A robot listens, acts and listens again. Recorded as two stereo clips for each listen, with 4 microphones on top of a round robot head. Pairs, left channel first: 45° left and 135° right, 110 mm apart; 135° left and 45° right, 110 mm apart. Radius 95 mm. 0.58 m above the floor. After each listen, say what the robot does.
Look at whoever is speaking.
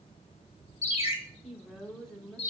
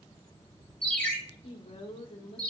Turn 130° left.
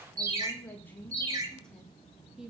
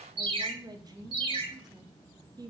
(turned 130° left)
Turn 50° right.
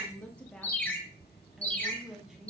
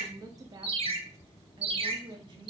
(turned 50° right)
Turn 45° right.
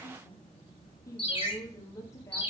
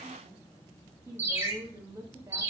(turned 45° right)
Facing the woman speaking.